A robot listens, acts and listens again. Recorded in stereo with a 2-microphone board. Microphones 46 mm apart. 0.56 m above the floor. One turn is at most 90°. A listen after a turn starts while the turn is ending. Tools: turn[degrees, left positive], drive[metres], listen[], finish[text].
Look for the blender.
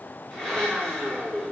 Action: turn[30]
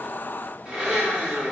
Thought: So it is at 15° right.
Action: turn[-15]
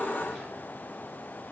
Action: listen[]
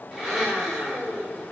Action: finish[Facing the blender, 1 to 2 m away.]